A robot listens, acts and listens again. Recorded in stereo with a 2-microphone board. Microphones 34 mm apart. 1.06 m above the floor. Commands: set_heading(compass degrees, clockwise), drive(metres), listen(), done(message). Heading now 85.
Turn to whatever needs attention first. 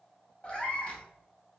listen()
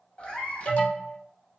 set_heading(40)
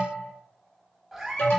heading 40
set_heading(310)
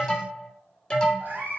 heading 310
set_heading(290)
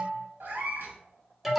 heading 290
set_heading(300)
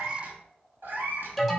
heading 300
done("Facing the alarm, under 1 m away.")